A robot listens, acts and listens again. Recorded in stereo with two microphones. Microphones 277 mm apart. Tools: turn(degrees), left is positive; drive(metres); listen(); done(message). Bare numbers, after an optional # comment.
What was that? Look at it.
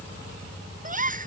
# The gasp: about 30° right or 150° right.
turn(-30)
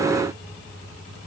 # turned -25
listen()
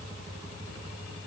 done("I heard a gasp, but can't make it out now. It was about 5° right or 125° right.")